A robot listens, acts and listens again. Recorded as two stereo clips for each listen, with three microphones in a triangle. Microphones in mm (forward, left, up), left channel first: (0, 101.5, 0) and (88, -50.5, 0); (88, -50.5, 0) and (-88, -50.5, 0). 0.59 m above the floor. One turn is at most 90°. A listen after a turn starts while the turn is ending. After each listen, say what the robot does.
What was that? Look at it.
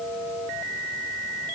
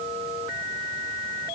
Keep listening.
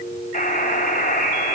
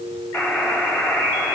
Turn 85° left.
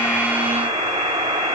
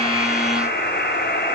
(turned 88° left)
Facing the buzzer.